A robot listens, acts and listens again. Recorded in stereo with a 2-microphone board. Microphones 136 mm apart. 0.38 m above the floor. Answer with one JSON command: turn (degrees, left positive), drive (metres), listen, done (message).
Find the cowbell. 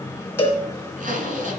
{"turn": 15}
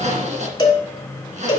{"turn": 150}
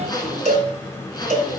{"turn": 60}
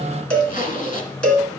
{"done": "Found it: a cowbell, straight ahead."}